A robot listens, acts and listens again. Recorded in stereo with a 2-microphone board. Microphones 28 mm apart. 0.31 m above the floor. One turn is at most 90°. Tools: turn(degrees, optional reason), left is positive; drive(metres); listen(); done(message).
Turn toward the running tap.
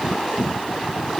listen()
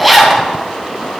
listen()
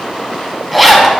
done("I can't make out a running tap, only a zipper.")